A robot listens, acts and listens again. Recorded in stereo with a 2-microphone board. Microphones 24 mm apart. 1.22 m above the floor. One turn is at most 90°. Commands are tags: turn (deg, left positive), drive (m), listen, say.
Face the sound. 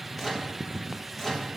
<turn deg="-30"/>
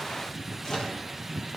<turn deg="25"/>
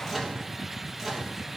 <say>Facing the microwave, 1 to 2 m away.</say>